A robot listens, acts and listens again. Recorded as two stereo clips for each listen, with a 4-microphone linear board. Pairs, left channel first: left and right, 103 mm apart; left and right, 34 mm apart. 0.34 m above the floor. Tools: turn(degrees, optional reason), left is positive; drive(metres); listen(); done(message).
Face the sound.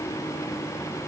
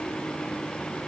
listen()
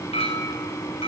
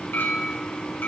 turn(degrees=90)
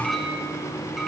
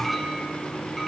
done("Facing the clink.")